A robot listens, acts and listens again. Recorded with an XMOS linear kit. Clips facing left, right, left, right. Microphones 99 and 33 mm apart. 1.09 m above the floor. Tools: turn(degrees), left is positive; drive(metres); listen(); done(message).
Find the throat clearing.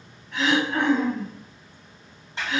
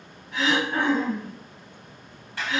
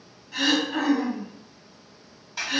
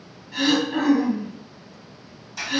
turn(degrees=-30)
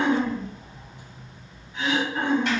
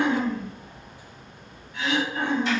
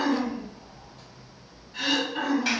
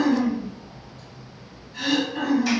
turn(degrees=20)
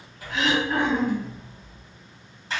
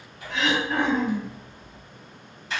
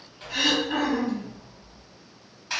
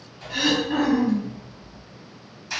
done("Found it: throat clearing, straight ahead, 1 to 2 m away.")